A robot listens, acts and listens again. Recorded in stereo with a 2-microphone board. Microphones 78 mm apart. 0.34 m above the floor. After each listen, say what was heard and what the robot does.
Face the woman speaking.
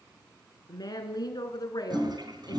The woman speaking: about 55° left or 125° left. Turn 55° left.
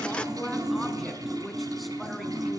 Facing the woman speaking, 2 to 4 m away.